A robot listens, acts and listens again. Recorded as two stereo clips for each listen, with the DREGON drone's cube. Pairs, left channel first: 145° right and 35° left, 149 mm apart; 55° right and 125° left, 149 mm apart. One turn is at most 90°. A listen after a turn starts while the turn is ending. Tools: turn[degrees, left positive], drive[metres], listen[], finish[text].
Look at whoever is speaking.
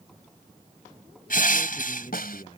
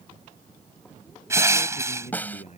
Thought: The man speaking: 95° right.
Action: turn[-90]
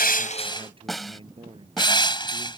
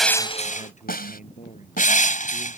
Thought: The man speaking is now 20° right.
Action: turn[-20]
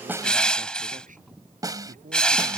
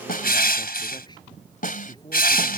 Action: finish[Found it: a man speaking, straight ahead.]